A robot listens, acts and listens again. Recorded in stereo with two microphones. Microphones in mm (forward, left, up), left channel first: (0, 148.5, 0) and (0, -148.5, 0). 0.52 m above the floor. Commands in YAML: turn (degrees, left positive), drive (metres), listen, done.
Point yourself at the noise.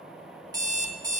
turn: -30
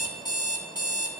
turn: 15
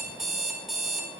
done: "Found it: an alarm clock, straight ahead."